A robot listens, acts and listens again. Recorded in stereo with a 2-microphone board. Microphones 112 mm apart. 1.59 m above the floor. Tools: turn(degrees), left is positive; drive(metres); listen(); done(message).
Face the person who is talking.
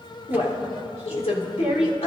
turn(degrees=90)
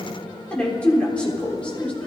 turn(degrees=10)
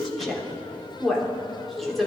done("Facing the woman speaking, 2 to 4 m away.")